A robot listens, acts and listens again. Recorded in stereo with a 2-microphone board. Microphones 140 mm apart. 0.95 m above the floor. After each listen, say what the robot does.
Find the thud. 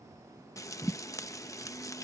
Turn 30° right.
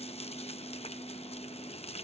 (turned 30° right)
Keep listening.
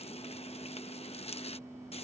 I heard a thud, but can't make it out now. It was about 25° left or 145° right.